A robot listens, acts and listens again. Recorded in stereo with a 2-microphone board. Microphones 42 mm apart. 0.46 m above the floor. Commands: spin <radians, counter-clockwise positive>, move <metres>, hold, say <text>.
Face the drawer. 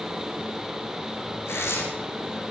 hold
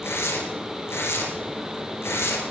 hold
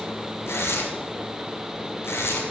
say I can't make out a drawer, only tearing paper.